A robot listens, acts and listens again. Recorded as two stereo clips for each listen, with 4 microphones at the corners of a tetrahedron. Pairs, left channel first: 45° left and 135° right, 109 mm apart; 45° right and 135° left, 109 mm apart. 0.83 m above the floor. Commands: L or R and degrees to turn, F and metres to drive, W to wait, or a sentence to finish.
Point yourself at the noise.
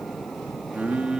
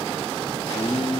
R55
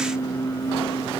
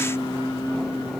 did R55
Facing the singing, 2 to 4 m away.